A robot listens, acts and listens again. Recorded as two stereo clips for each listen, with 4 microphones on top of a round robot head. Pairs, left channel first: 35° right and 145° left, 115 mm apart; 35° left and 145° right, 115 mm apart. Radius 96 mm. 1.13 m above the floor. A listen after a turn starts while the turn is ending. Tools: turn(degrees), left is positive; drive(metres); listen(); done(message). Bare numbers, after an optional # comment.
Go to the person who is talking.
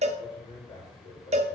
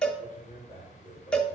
drive(1.0)
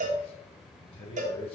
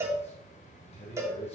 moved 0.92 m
drive(1.0)
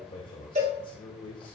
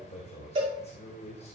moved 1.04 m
# The man speaking is now 10° left.
turn(10)
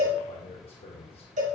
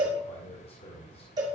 drive(1.0)
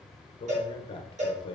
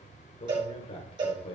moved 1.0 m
drive(1.0)
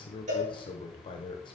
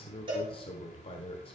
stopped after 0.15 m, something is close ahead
done("Arrived at the man speaking, straight ahead.")